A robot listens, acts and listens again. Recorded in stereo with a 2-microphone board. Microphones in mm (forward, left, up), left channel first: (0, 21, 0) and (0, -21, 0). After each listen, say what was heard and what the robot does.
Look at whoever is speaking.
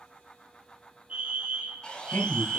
The man speaking: about 60° left or 120° left. Turn 60° left.
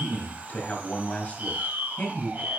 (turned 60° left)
So it is at 40° left. Turn 40° left.
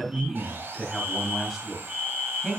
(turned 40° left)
Found it: a man speaking, straight ahead.